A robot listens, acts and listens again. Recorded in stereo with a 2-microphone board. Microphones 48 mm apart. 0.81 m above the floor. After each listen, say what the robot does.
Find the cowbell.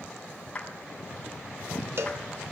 Turn 55° right.
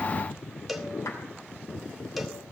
Facing the cowbell.